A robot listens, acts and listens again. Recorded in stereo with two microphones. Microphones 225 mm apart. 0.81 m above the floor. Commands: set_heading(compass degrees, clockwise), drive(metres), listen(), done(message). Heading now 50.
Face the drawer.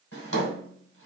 set_heading(320)
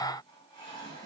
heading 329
set_heading(319)
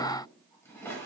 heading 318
set_heading(308)
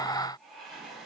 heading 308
listen()
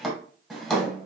done("Facing the drawer.")